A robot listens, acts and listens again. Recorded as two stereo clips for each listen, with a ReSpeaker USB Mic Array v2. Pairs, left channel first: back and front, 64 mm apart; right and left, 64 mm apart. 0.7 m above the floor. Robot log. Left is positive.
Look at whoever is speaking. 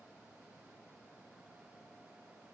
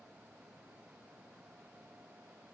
cmd idle
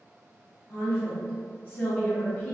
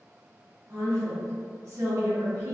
note: The woman speaking: 125° left.
cmd yaw +125
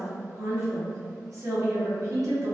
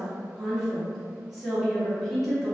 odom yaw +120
end: Found it: a woman speaking, straight ahead, 1 to 2 m away.